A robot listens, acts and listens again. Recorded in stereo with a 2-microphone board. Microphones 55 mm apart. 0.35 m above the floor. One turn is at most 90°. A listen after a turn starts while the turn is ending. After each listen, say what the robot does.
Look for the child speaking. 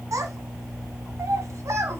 Turn 60° right.
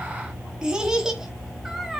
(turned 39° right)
Found it: a child speaking, straight ahead.